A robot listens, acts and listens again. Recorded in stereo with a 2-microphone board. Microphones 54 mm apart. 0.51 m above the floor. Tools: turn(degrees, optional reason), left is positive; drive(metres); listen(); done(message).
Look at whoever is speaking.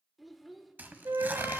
turn(degrees=30)
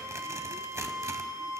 listen()
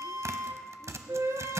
listen()
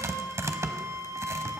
done("I heard a child speaking, but can't make it out now. It was about 30° right or 150° left.")